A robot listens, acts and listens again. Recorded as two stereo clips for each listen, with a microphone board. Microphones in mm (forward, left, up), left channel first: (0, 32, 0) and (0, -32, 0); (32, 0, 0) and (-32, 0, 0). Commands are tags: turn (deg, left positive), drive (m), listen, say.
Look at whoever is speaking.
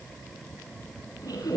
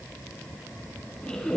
<listen/>
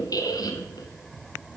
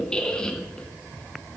<listen/>
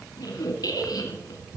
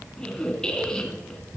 <say>I can't make out anyone speaking to turn to.</say>